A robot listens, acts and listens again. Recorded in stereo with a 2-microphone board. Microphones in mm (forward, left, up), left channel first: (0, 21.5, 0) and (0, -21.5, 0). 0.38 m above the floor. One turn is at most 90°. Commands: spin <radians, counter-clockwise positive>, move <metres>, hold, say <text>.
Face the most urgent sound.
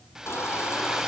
spin 1.57
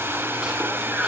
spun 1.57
spin -0.35
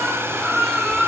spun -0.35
say Facing the baby crying, over 4 m away.